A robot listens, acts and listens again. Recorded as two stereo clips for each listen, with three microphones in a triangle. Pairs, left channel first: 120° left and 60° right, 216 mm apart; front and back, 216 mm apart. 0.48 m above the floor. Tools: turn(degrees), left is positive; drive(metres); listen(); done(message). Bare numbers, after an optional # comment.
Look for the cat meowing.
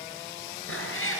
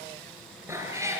# The cat meowing: 105° left.
turn(105)
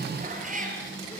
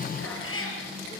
# The cat meowing is now 10° right.
turn(-10)
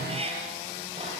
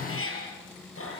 done("Found it: a cat meowing, straight ahead, over 4 m away.")